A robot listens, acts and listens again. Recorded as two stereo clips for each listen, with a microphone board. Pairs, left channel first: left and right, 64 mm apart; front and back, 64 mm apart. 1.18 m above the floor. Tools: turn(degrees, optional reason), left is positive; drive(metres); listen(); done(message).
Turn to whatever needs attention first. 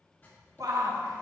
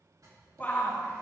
turn(degrees=-65, reason="The shout: 65° right.")
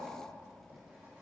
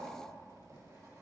listen()
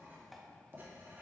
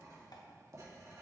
listen()
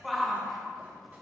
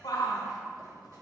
done("Facing the shout, 1 to 2 m away.")